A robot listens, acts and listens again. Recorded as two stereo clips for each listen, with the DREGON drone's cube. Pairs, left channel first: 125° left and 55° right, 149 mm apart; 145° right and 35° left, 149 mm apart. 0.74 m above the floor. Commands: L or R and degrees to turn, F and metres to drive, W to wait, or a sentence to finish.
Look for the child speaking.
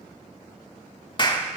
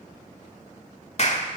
W
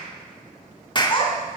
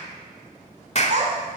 L70
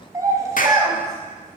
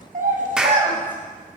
L15
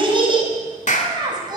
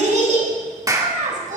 Found it: a child speaking, straight ahead.